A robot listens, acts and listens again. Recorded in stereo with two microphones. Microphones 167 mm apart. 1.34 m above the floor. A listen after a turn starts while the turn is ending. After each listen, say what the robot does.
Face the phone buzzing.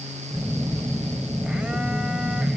Turn 30° right.
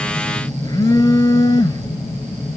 Turn 20° left.
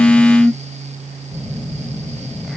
Facing the phone buzzing.